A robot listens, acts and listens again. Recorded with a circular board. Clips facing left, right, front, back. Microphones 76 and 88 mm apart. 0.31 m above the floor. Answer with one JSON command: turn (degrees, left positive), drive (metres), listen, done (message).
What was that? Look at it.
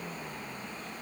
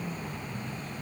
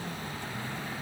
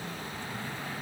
{"listen": true}
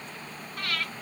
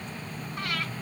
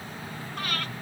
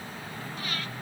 {"turn": -20}
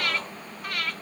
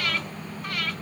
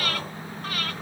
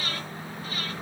{"done": "Facing the breathing."}